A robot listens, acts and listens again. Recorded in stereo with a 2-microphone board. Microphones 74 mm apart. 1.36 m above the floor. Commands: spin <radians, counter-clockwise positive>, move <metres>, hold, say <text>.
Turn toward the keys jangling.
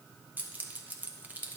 spin -0.44
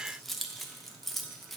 say Found it: keys jangling, straight ahead, under 1 m away.